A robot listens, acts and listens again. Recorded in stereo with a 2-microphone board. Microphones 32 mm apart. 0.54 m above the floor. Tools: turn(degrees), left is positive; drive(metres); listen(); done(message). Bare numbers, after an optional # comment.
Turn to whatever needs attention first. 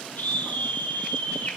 # The scream: about 65° left or 115° left.
turn(65)
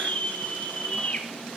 # So it is at 50° left.
turn(50)
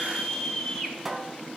# The scream is now 10° left.
turn(10)
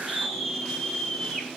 done("Facing the scream, over 4 m away.")